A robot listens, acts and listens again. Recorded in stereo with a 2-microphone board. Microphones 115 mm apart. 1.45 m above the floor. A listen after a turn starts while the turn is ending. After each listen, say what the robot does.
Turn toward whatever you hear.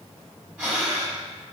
Turn 30° right.
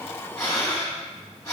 Turn 25° left.
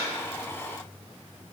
Keep listening.
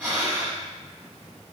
Turn 15° right.
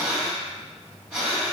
Found it: breathing, straight ahead, 1 to 2 m away.